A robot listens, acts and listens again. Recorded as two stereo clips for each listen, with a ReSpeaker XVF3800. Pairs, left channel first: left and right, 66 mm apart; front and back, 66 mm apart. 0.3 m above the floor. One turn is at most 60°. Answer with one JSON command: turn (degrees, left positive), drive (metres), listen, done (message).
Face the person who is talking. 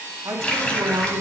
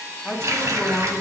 {"turn": -60}
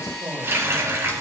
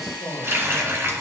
{"turn": -10}
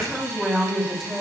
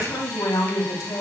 {"done": "Facing the woman speaking."}